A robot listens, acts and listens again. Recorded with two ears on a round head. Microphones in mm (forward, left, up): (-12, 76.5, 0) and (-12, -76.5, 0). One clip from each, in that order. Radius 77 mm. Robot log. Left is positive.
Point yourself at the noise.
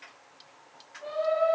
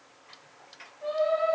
cmd yaw +30
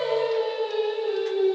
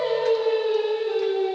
cmd yaw +30
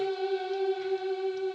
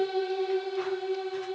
note: So it is at 15° right.
cmd yaw -15
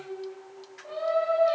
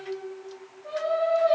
note: The singing is now 10° left.
cmd yaw +10
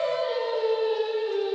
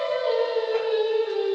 end: Found it: singing, straight ahead, over 4 m away.